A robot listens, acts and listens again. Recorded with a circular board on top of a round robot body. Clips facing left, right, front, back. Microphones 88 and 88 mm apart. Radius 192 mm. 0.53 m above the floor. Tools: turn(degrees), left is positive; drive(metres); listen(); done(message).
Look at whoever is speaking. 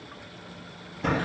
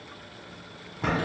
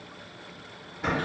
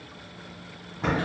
listen()
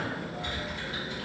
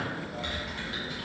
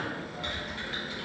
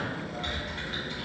listen()
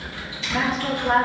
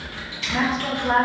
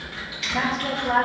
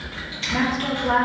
turn(degrees=-160)
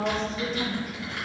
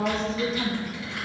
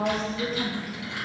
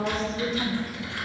turn(degrees=-45)
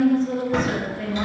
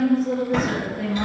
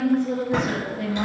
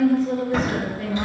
turn(degrees=-10)
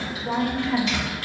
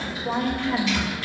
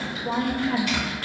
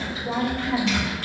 done("Facing the woman speaking.")